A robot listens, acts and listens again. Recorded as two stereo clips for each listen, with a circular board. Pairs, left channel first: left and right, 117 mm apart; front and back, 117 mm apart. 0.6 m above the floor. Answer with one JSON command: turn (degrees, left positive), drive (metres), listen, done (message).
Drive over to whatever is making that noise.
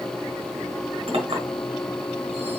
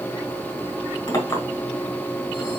{"turn": -60}
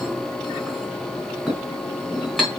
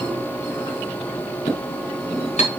{"drive": 1.0}
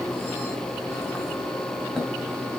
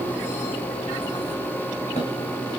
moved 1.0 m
{"listen": true}
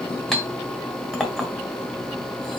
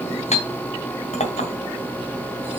{"drive": 1.0}
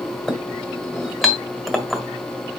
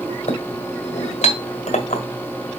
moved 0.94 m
{"drive": 1.0}
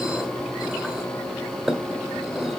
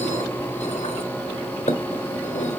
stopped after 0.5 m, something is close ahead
{"done": "I am next to the clink."}